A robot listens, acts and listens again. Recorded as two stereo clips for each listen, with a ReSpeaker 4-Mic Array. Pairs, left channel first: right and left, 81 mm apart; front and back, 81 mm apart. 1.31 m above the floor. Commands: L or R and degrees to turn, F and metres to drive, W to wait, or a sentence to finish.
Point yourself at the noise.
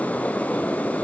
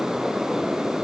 W
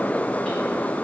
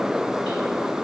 W
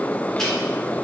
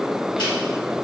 I can't make out anything.